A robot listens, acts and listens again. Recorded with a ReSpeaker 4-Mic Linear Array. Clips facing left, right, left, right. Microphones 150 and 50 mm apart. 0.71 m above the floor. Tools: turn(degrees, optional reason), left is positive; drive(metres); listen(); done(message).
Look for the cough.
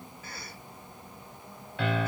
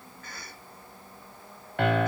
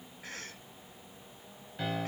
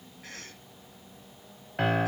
turn(degrees=30)
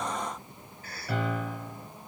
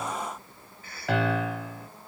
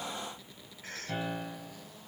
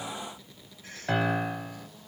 turn(degrees=140, reason="So it is at 140° left.")
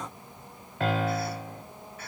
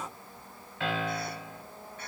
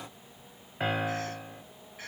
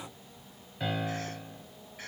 done("Found it: a cough, straight ahead.")